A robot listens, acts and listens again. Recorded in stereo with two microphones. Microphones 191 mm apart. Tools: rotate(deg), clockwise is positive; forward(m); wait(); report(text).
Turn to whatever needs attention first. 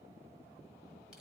wait()
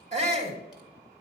rotate(40)
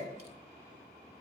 wait()
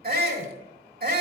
rotate(95)
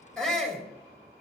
report("Facing the shout.")